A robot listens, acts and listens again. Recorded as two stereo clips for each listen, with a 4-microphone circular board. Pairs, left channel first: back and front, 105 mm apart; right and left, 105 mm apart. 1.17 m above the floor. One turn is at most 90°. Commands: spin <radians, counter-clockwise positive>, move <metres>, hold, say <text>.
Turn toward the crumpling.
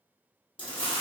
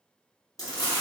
spin -1.57
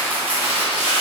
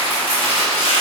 spin -1.22
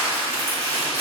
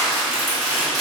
say Found it: crumpling, straight ahead.